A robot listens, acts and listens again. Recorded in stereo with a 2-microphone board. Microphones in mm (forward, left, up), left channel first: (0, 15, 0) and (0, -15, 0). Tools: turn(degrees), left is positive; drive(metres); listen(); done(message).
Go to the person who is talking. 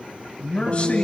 turn(degrees=40)
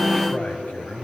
turn(degrees=95)
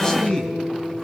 turn(degrees=20)
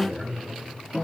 turn(degrees=10)
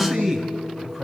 drive(metres=1.0)
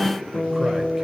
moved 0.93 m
listen()
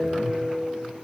listen()
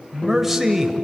turn(degrees=-10)
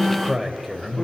drive(metres=1.0)
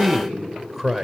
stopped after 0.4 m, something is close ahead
done("I am next to the man speaking.")